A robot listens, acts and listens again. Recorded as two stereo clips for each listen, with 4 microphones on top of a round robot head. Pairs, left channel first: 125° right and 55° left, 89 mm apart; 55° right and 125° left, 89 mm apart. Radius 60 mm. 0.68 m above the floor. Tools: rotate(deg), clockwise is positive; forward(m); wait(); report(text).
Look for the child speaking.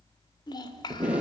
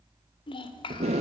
rotate(85)
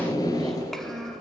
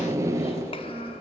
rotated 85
rotate(40)
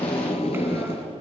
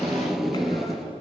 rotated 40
wait()
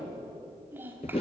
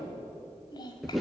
rotate(15)
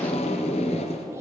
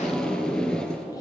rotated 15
wait()
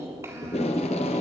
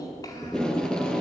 wait()
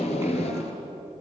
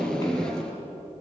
report("Facing where the child speaking came from. I can't hear it now.")